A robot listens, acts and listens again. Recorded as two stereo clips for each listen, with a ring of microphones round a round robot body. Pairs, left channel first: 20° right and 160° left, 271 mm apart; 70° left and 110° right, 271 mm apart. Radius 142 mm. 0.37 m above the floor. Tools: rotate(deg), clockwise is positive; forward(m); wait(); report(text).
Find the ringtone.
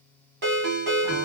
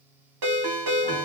rotate(145)
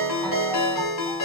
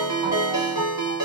rotate(35)
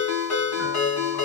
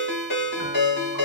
rotate(-15)
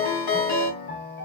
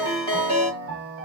report("Found it: a ringtone, straight ahead, 1 to 2 m away.")